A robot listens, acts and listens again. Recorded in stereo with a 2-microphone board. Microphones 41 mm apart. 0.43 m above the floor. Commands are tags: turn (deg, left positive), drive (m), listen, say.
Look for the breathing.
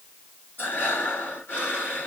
<turn deg="55"/>
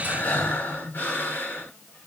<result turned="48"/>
<turn deg="75"/>
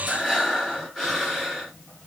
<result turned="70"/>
<say>Facing the breathing, 2 to 4 m away.</say>